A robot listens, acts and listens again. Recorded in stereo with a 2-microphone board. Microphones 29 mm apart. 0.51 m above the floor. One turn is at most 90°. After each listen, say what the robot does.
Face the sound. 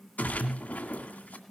Turn 70° left.
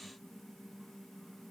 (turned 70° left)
Keep listening.
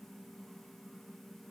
I heard a splash, but can't make it out now. It was about straight ahead or 40° left.